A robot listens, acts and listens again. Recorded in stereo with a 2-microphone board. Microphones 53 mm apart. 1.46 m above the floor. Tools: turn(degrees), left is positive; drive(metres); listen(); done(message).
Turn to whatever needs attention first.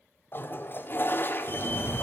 turn(degrees=55)
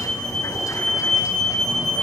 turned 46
turn(degrees=15)
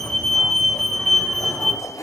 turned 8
done("Facing the fire alarm, 2 to 4 m away.")